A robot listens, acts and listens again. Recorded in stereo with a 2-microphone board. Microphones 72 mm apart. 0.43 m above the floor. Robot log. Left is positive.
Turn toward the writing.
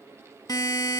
cmd idle
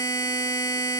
cmd idle
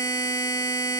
end: I can't make out writing to turn to.